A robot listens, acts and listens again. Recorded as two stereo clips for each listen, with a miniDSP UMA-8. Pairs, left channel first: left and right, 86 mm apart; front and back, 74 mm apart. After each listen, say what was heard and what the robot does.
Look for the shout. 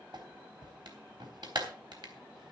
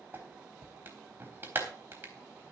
Keep listening.
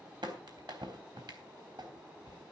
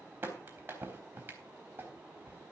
Keep listening.
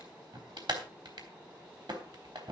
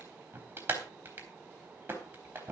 I can't make out a shout, only a clap.